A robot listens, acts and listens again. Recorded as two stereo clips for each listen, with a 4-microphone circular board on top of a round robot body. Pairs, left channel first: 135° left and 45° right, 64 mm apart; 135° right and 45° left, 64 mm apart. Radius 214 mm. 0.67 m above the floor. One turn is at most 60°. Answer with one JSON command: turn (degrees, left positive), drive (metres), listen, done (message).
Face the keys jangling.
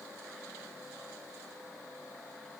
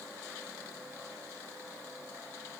{"listen": true}
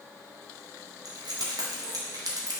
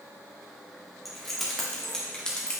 {"turn": -55}
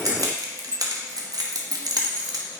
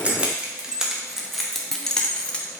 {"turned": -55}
{"turn": -60}
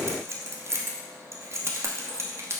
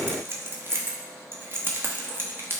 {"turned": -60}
{"done": "Facing the keys jangling, 1 to 2 m away."}